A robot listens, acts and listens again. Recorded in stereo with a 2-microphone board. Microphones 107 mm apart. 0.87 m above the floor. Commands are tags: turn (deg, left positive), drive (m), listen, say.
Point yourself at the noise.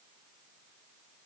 <listen/>
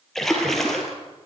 <turn deg="30"/>
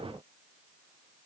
<listen/>
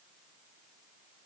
<say>I heard a splash, but can't make it out now. It was about 25° right or 145° left.</say>